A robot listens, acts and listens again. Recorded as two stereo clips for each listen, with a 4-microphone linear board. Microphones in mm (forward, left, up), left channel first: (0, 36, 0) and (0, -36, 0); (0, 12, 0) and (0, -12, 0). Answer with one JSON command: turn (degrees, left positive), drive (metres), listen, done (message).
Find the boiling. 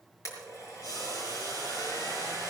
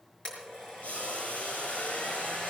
{"turn": 70}
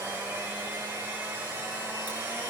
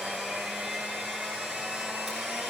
{"listen": true}
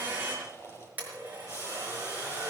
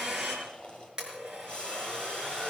{"turn": 30}
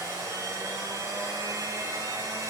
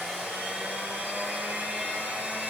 {"listen": true}
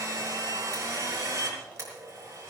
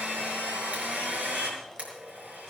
{"listen": true}
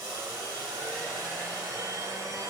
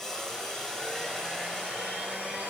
{"turn": 10}
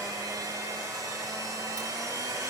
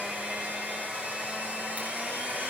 {"listen": true}
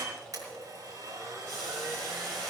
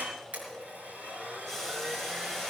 {"listen": true}
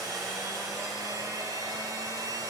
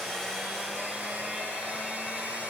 {"done": "Facing where the boiling came from. I can't hear it now."}